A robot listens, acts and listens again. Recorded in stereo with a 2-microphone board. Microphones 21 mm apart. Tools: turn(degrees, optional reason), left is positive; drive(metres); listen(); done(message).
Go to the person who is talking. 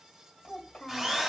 turn(degrees=50, reason="The child speaking: about 50° left or 130° left.")
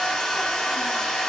listen()
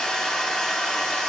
listen()
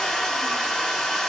done("I heard a child speaking, but can't make it out now. It was about straight ahead or 80° left. I did not reach it.")